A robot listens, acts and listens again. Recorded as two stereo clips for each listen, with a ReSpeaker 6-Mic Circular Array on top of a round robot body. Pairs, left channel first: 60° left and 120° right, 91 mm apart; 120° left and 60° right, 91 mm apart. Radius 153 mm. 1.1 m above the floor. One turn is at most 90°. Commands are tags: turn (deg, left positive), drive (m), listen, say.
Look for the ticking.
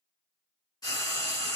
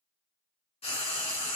<listen/>
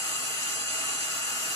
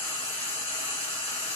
<listen/>
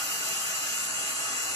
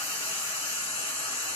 <say>I can't make out ticking, only frying.</say>